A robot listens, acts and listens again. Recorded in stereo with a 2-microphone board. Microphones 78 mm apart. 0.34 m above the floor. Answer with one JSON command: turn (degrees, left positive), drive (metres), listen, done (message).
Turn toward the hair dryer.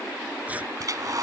{"turn": -50}
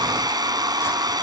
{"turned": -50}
{"turn": -75}
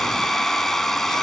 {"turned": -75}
{"done": "Facing the hair dryer."}